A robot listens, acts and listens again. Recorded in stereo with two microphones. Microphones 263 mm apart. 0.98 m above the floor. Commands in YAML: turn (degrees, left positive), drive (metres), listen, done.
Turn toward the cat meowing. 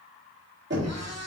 turn: -90
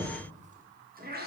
turn: -40
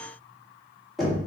listen: true
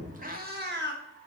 turn: -45
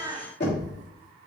turn: -15
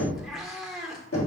done: "Found it: a cat meowing, straight ahead."